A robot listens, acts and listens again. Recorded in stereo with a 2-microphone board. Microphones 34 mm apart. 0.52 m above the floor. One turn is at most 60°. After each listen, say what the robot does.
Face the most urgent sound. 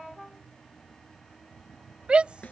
Turn 30° right.
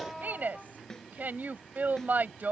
Turn 60° right.
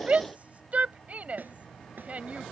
Turn 45° right.
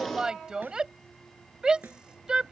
Turn 25° right.
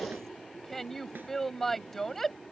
Found it: a shout, straight ahead.